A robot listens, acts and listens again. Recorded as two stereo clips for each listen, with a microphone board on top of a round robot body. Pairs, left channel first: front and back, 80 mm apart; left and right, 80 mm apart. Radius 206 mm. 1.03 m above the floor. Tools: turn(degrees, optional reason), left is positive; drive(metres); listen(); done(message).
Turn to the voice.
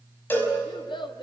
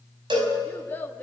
turn(degrees=20, reason="The child speaking: 20° left.")
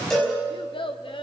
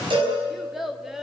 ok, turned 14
done("Facing the child speaking.")